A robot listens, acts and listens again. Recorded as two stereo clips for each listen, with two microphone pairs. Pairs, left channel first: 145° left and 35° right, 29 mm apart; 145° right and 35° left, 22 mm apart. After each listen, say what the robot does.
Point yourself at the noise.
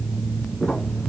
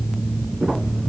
Turn 60° left.
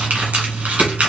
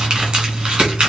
Turn 10° right.
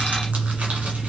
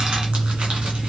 Keep listening.
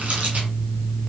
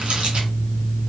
Keep listening.
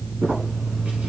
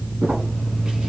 Found it: crumpling, straight ahead, 1 to 2 m away.